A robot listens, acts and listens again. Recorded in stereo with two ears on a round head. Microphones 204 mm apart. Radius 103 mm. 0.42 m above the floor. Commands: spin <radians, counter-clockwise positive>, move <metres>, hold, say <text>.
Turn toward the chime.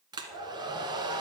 hold
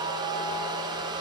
hold
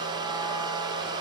say I can't make out a chime, only a hair dryer.